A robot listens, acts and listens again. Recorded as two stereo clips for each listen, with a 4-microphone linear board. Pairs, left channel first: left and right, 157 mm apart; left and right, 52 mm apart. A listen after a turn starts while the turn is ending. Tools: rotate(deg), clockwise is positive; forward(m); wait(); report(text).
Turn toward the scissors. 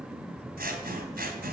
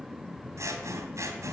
rotate(75)
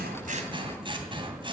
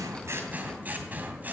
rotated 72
rotate(35)
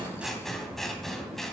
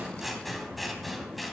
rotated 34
report("Facing the scissors.")